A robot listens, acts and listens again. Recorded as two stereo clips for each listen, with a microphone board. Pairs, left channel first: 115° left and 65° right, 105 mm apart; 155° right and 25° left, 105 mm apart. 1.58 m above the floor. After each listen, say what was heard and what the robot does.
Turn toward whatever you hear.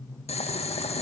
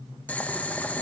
The boiling: 125° left. Turn 125° left.
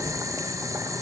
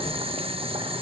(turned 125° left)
The boiling is now 10° right. Turn 10° right.
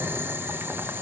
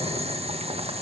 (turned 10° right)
Facing the boiling, 2 to 4 m away.